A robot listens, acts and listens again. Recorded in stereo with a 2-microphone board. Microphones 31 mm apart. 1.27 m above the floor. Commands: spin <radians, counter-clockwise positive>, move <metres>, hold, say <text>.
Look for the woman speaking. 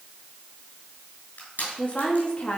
spin 0.70
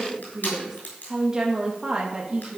spin -0.52
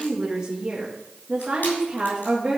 spin -0.44
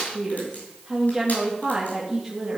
say Found it: a woman speaking, straight ahead, 2 to 4 m away.